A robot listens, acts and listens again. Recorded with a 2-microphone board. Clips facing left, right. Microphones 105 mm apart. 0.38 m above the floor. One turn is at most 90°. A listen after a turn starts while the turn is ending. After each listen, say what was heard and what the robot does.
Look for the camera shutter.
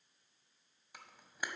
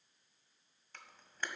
Turn 30° left.
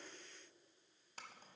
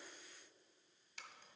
So it is at 135° left. Turn 90° left.
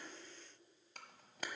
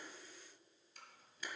The camera shutter is now 90° left. Turn 90° left.
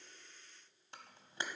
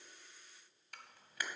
The camera shutter is now 30° left. Turn 30° left.
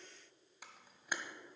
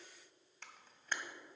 The camera shutter is now 10° left. Turn 10° left.
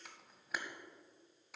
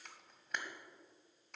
Found it: a camera shutter, straight ahead.